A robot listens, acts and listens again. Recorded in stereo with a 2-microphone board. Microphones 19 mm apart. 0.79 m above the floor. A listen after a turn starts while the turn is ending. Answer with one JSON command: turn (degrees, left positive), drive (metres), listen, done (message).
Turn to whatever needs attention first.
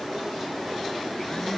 {"listen": true}
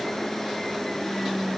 {"listen": true}
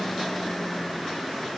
{"done": "I can't make out anything urgent to turn to."}